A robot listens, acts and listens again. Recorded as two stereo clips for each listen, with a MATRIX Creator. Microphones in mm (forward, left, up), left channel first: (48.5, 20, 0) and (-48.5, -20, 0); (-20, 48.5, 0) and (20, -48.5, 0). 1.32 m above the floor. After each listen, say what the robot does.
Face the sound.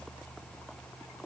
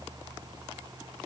Keep listening.
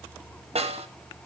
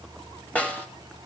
Turn 170° right.
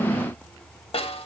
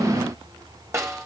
Facing the snare drum.